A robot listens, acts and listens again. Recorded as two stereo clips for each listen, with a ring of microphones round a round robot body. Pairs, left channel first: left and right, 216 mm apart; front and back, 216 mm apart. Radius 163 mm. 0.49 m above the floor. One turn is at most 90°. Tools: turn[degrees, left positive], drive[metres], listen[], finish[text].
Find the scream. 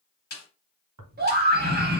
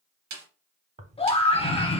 Thought: The scream: 60° right.
Action: turn[-60]
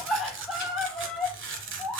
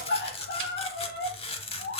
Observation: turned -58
Action: finish[Facing the scream, 1 to 2 m away.]